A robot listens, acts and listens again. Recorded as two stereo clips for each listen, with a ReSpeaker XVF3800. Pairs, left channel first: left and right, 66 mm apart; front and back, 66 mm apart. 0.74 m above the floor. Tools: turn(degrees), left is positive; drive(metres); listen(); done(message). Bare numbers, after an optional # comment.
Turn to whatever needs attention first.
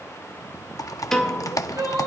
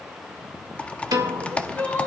# The crying: 60° right.
turn(-60)
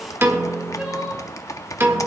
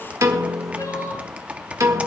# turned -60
# The crying is now 15° right.
turn(-15)
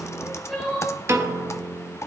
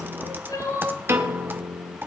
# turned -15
done("Found it: crying, straight ahead, over 4 m away.")